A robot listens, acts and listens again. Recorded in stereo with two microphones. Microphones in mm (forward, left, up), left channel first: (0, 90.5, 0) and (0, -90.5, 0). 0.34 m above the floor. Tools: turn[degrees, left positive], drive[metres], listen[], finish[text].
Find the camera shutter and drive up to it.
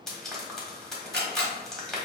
Thought: The camera shutter: about 65° right or 115° right.
Action: turn[-65]
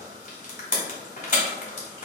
Action: listen[]
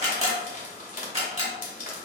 Thought: So it is at 40° right.
Action: turn[-40]
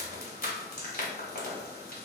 Action: listen[]
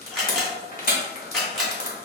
Action: drive[1.0]
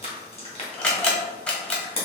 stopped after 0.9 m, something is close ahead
Thought: The camera shutter is now 10° left.
Action: turn[10]
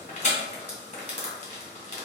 Action: listen[]
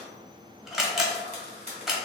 Action: finish[I am next to the camera shutter.]